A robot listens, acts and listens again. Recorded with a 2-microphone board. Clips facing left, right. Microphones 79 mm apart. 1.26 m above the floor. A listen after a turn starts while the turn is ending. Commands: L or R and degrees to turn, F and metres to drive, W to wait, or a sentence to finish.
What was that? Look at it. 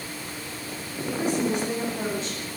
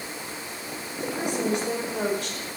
R90
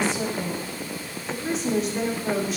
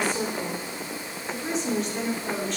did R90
Facing the woman speaking, 2 to 4 m away.